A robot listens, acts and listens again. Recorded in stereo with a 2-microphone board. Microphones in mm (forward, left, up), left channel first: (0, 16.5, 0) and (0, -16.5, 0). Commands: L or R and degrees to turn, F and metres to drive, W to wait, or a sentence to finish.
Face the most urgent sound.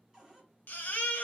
L65
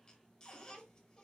L30
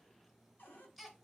Facing the baby crying, 1 to 2 m away.